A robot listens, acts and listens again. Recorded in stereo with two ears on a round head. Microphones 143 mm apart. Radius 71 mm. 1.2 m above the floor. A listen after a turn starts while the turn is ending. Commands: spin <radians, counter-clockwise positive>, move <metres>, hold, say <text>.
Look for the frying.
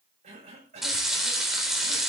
spin 0.52
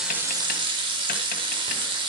spin -0.52
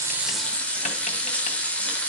spin 0.17
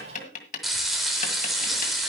say Found it: frying, straight ahead, 2 to 4 m away.